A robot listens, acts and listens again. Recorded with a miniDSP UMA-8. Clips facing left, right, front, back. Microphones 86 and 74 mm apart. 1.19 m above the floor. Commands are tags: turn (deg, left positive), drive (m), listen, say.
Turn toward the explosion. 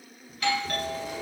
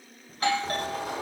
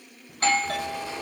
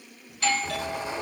<turn deg="-110"/>
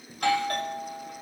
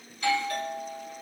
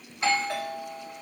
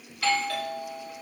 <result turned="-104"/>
<turn deg="-10"/>
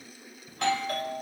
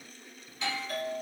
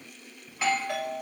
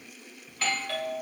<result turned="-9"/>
<say>Facing where the explosion came from. I can't hear it now.</say>